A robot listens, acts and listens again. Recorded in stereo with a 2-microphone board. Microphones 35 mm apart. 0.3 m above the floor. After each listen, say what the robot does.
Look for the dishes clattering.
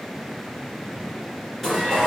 Turn 30° left.
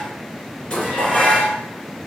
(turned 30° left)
Turn 145° left.
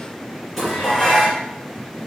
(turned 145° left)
Facing the dishes clattering, 2 to 4 m away.